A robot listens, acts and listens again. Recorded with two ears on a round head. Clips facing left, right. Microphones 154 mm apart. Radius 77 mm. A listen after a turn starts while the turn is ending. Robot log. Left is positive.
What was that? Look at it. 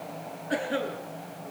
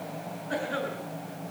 note: The cough: about 25° left or 155° left.
cmd yaw +25
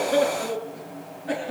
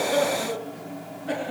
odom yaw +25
end: Found it: a cough, straight ahead, over 4 m away.